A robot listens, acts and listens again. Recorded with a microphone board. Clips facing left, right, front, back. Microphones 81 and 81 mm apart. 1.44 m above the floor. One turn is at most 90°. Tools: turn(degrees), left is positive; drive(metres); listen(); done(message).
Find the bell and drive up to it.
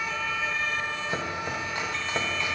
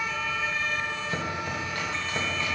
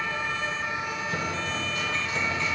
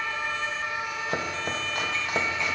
listen()
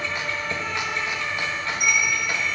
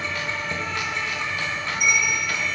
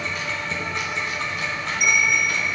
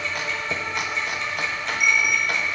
turn(degrees=55)
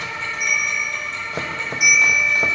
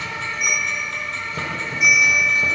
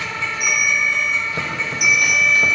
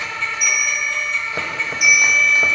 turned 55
turn(degrees=15)
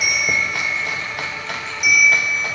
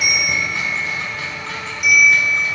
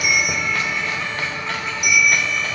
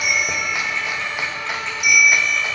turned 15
drive(metres=1.0)
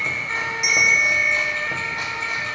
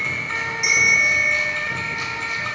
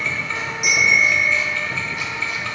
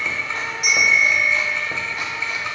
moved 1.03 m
drive(metres=1.0)
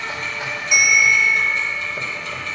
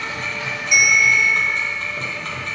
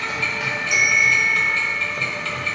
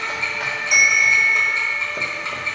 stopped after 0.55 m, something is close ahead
done("I am next to the bell.")